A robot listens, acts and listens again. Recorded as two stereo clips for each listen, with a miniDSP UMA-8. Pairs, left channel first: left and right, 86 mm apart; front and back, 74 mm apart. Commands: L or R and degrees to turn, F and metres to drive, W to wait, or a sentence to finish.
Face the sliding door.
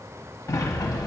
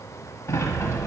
L45
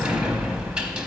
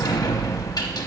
R15
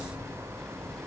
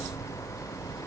Facing the sliding door.